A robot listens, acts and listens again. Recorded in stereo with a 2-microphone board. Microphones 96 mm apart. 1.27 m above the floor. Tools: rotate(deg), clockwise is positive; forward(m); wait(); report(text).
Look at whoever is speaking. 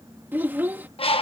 rotate(20)
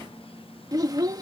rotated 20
rotate(140)
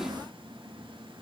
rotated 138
wait()
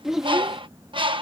report("Facing the child speaking.")